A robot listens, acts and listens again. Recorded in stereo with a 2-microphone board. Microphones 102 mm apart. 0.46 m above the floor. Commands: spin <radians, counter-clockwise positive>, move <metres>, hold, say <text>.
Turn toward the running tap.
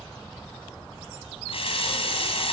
spin 1.22
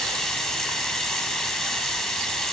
say Found it: a running tap, straight ahead.